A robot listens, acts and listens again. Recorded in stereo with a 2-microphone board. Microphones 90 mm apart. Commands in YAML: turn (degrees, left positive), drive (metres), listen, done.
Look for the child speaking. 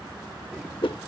listen: true
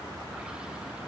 listen: true
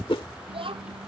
turn: -90
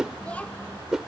turn: 15
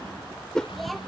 done: "Found it: a child speaking, straight ahead."